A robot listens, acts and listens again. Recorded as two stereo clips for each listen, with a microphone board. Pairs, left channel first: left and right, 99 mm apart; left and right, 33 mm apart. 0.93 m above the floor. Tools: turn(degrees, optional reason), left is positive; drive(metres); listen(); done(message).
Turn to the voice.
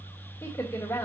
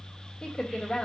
turn(degrees=25, reason="The woman speaking: about 25° left or 155° left.")
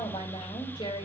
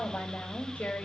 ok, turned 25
turn(degrees=125, reason="So it is at 125° left.")
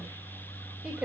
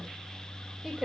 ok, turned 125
turn(degrees=-10, reason="The woman speaking is now 10° right.")
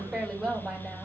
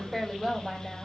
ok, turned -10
done("Found it: a woman speaking, straight ahead, 2 to 4 m away.")